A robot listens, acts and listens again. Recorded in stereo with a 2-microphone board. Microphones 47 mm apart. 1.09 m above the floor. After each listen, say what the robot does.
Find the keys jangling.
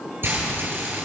Keep listening.
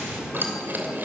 Turn 45° right.
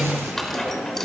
Turn 10° left.
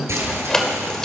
Turn 15° left.
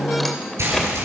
Keep listening.
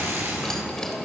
Keep listening.
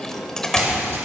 Turn 15° left.
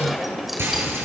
Facing the keys jangling.